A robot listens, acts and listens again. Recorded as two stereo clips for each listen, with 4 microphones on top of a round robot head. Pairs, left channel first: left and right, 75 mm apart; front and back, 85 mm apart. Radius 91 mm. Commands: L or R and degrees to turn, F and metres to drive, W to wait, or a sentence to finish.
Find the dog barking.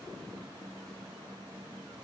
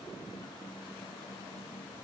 W
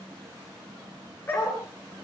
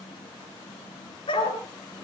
L20
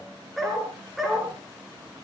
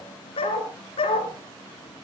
R10
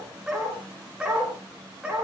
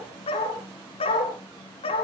R10
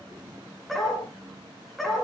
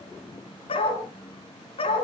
Found it: a dog barking, straight ahead, 2 to 4 m away.